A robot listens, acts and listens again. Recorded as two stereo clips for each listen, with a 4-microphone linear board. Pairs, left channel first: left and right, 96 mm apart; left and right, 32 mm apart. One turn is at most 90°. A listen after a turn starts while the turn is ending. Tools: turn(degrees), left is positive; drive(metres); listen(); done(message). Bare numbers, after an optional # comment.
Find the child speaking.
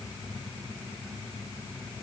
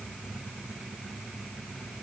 listen()
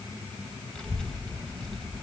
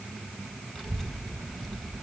turn(30)
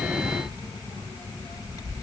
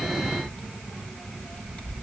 # So it is at 140° left.
turn(90)
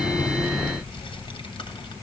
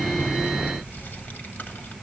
# The child speaking is now 75° left.
turn(75)
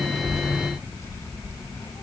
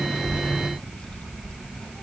# The child speaking is now 35° left.
turn(35)
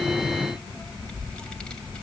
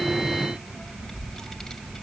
# The child speaking is now 10° left.
turn(10)
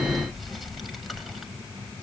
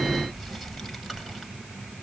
done("Facing the child speaking.")